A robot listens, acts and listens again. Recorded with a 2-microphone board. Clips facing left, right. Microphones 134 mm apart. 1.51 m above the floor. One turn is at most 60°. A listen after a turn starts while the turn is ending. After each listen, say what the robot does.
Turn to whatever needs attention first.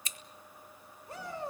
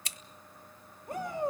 Turn 55° right.
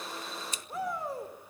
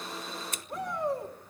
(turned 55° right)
Found it: a shout, straight ahead, over 4 m away.